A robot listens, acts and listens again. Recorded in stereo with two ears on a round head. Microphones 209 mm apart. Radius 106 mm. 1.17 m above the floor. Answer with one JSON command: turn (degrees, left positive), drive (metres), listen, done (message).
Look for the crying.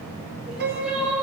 {"turn": -30}
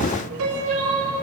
{"turn": -145}
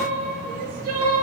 {"turn": -35}
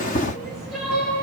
{"done": "Facing the crying, 2 to 4 m away."}